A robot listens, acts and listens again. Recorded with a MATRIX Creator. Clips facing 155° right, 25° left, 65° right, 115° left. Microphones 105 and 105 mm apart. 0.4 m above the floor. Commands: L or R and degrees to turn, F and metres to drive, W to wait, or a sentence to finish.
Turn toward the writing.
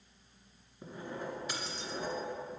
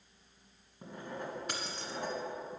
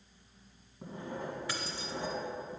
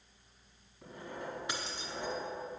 Facing the writing, 2 to 4 m away.